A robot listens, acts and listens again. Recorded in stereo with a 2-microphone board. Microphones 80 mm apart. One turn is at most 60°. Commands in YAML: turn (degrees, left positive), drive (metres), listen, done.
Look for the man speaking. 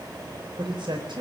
turn: -60
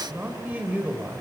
turn: -15
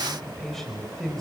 done: "Found it: a man speaking, straight ahead, over 4 m away."